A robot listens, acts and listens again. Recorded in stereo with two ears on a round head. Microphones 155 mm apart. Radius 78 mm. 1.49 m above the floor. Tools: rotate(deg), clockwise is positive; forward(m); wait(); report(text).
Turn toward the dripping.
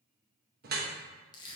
rotate(55)
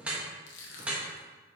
report("Facing the dripping.")